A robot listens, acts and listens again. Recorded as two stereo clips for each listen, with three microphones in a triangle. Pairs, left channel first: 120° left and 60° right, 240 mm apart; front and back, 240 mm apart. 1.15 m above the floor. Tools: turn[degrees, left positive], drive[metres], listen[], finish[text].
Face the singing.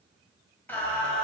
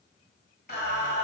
Thought: The singing: 35° left.
Action: turn[35]
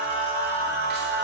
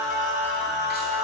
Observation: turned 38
Thought: The singing is now 40° right.
Action: turn[-40]
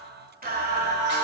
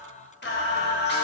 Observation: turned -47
Thought: The singing is now 35° right.
Action: turn[-35]
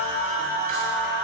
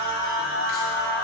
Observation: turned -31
Thought: The singing is now 20° right.
Action: turn[-20]
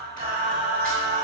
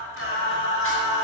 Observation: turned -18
Thought: The singing is now 10° right.
Action: turn[-10]
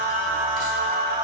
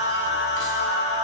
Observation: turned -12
Action: finish[Facing the singing, 2 to 4 m away.]